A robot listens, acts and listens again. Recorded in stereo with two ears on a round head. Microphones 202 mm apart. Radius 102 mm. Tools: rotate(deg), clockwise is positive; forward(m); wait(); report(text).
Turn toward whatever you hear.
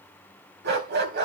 rotate(50)
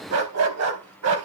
rotate(75)
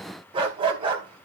rotate(25)
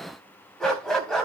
report("Found it: a dog barking, straight ahead, 2 to 4 m away.")